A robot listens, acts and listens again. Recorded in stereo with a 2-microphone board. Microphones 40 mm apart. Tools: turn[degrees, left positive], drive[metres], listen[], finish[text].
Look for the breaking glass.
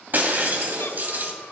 Thought: The breaking glass: about 45° right or 135° right.
Action: turn[-45]
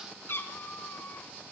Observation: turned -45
Action: listen[]
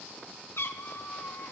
Action: finish[I heard breaking glass, but can't make it out now. It was about straight ahead or 90° right.]